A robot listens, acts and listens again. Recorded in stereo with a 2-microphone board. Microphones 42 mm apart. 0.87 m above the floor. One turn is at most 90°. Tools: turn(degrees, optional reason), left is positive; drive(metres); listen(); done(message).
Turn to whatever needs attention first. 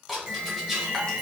turn(degrees=-50, reason="The alarm: about 50° right or 130° right.")
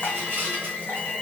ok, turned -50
done("Found it: an alarm, straight ahead, 1 to 2 m away.")